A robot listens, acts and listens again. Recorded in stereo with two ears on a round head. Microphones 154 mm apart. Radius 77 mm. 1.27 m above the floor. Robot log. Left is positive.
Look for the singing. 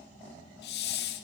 cmd idle
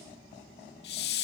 cmd idle
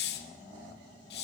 end: I can't make out singing to turn to.